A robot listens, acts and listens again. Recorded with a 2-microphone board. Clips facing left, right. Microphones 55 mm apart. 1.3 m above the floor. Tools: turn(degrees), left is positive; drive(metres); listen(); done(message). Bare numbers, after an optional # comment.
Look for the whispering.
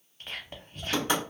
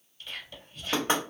# The whispering: about 50° left or 130° left.
turn(50)
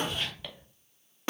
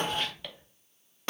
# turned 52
done("Facing the whispering, under 1 m away.")